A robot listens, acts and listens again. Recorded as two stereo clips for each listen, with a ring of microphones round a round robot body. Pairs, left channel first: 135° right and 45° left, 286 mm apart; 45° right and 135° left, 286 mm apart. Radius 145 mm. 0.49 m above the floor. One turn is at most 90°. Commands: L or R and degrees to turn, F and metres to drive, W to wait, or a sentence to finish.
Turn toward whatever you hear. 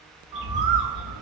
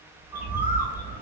L50
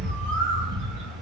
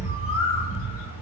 Facing the bird, 1 to 2 m away.